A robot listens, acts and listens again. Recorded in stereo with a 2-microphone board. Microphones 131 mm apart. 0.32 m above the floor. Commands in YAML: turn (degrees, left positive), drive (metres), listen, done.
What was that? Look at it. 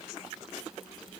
listen: true
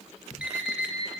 turn: -30
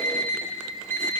turn: 20
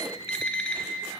turn: 10
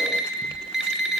done: "Found it: an alarm clock, straight ahead."